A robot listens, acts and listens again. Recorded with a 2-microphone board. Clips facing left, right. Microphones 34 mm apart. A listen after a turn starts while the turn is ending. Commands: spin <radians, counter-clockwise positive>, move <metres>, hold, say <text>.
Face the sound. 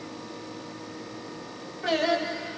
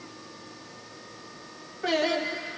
spin 0.52
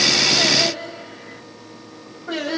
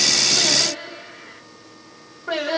spin -0.35
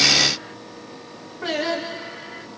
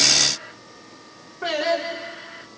say Facing the singing, 1 to 2 m away.